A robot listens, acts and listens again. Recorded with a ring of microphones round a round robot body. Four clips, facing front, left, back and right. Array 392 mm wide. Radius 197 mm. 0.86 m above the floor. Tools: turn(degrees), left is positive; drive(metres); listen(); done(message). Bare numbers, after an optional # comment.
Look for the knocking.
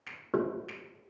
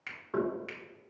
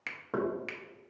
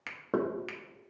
# The knocking: 75° right.
turn(-75)
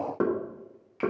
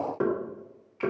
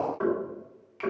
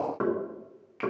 # The knocking is now 15° right.
turn(-15)
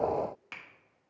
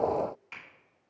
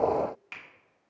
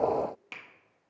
listen()
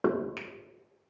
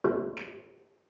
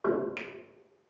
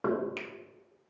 done("Found it: knocking, straight ahead, 1 to 2 m away.")